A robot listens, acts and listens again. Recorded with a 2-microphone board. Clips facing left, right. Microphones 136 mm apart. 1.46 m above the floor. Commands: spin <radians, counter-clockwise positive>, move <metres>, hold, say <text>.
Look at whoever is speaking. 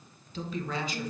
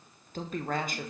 spin -0.87
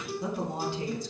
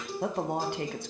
spin -1.22
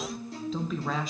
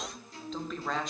say Facing the woman speaking.